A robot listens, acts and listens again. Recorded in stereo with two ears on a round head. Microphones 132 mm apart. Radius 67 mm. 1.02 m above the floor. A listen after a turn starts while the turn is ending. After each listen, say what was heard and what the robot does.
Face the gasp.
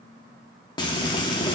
Keep listening.
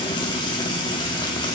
Keep listening.
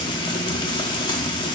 I can't make out a gasp, only frying.